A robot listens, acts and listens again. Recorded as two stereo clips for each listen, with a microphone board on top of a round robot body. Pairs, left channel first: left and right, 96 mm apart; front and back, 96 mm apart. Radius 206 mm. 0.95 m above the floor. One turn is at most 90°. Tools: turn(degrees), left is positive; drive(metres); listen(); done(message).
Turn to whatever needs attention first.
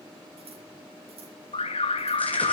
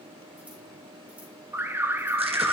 turn(degrees=90)
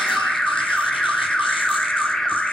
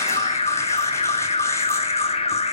done("Facing the alarm.")